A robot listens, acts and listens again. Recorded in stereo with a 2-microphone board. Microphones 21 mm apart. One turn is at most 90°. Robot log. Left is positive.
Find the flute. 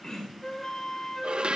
note: The flute: about 25° left or 155° left.
cmd yaw +25
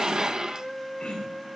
end: Facing the flute.